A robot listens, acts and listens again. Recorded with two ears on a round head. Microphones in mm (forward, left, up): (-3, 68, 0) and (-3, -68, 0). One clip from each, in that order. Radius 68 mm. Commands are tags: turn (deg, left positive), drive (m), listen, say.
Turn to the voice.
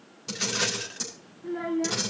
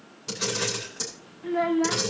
<turn deg="-55"/>
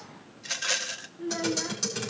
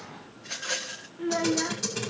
<turn deg="-35"/>
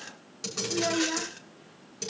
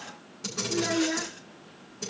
<say>Found it: a child speaking, straight ahead.</say>